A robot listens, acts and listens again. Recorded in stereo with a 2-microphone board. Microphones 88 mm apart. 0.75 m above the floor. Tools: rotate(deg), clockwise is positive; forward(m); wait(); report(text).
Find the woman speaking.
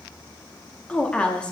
rotate(-30)
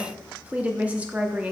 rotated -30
rotate(20)
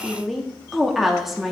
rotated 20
report("Found it: a woman speaking, straight ahead, under 1 m away.")